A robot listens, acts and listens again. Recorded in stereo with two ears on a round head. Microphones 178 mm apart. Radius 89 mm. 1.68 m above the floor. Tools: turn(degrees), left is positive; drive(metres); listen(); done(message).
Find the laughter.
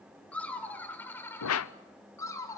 turn(degrees=15)
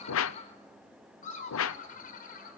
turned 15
turn(degrees=135)
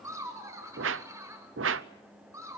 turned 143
turn(degrees=-15)
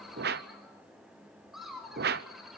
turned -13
done("Found it: laughter, straight ahead, over 4 m away.")